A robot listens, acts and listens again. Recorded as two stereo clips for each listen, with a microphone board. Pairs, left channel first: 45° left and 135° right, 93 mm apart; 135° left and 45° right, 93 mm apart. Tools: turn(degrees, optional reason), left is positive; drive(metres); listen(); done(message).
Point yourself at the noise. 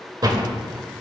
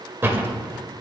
turn(degrees=-105, reason="The door slam: 105° right.")
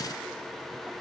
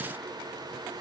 done("I heard a door slam from this way, but can't make it out now.")